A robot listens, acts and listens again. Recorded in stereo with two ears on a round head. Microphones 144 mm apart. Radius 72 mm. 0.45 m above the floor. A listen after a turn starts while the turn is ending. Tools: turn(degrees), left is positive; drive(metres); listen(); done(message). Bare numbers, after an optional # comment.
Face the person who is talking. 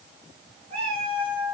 listen()
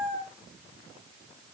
listen()
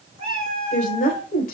# The woman speaking: about 55° left or 125° left.
turn(55)
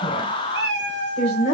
# So it is at 45° left.
turn(45)
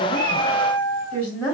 # The woman speaking is now 10° left.
turn(10)
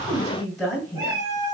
done("Facing the woman speaking, 2 to 4 m away.")